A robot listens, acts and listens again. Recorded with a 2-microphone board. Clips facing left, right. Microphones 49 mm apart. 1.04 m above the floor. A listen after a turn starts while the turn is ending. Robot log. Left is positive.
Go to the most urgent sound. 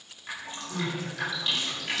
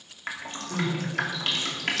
note: The crying: about 20° right or 160° right.
cmd yaw -20
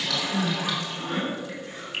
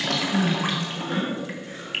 cmd fwd 1.0
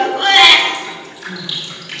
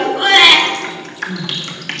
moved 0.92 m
cmd fwd 1.0
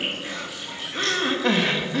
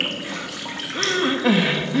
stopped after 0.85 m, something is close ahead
end: Arrived at the crying, straight ahead.